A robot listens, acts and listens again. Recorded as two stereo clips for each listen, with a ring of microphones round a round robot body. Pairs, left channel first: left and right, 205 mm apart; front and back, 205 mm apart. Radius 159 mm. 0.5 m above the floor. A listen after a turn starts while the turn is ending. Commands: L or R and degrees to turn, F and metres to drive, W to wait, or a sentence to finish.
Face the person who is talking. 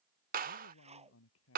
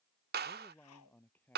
L80
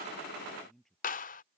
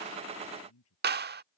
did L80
Facing the man speaking.